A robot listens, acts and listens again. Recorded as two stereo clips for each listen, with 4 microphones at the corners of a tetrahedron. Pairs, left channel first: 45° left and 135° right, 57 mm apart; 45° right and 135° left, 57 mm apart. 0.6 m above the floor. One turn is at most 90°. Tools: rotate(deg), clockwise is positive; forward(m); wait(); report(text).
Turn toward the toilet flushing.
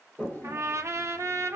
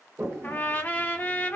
rotate(-90)
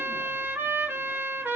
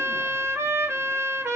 rotate(-10)
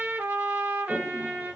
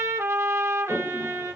report("Facing the toilet flushing.")